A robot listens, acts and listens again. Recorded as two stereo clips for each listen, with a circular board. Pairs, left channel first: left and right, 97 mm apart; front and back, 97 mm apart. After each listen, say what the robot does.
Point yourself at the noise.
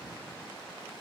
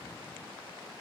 Keep listening.
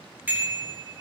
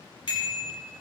Turn 20° right.
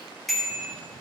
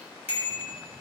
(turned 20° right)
Found it: a bicycle bell, straight ahead, over 4 m away.